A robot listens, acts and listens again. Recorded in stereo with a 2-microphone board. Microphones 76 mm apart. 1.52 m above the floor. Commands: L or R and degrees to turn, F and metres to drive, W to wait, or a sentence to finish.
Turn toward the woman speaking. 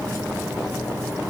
W
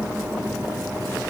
W
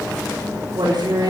R70
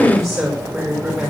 R25
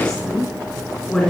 Found it: a woman speaking, straight ahead.